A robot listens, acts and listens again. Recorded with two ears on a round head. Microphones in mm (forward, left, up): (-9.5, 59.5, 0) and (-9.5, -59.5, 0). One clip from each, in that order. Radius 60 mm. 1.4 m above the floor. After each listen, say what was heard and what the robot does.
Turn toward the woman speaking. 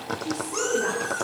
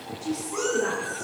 Turn 30° left.
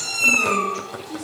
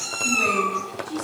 So it is at 20° right. Turn 20° right.
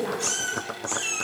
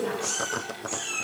Found it: a woman speaking, straight ahead, 2 to 4 m away.